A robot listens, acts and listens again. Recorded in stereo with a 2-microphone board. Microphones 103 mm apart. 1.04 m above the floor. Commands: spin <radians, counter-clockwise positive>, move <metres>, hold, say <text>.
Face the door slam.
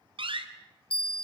spin -0.96
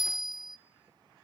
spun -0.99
hold
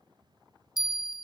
say I heard a door slam, but can't make it out now. It was about straight ahead or 65° right.